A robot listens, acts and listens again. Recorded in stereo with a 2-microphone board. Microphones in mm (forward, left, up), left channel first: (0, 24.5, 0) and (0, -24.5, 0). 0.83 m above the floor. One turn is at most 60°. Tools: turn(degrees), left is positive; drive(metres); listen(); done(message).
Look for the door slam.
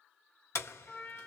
turn(degrees=60)
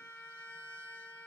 turn(degrees=30)
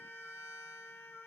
done("I heard a door slam from this way, but can't make it out now.")